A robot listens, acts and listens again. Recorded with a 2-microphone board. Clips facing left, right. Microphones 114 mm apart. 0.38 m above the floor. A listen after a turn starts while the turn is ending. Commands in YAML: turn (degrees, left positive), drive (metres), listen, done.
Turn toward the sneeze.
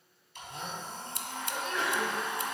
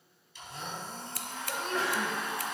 turn: -40
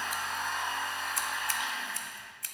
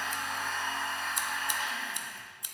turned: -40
listen: true
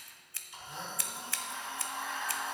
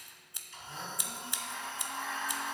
done: "I heard a sneeze, but can't make it out now. It was about straight ahead or 100° right."